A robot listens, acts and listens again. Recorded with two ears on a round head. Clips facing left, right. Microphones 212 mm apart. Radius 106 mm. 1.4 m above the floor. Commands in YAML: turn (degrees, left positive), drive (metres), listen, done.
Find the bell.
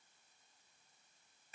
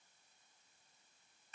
listen: true
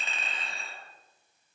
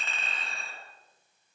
listen: true
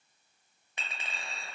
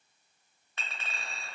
done: "I can't make out a bell, only a clink."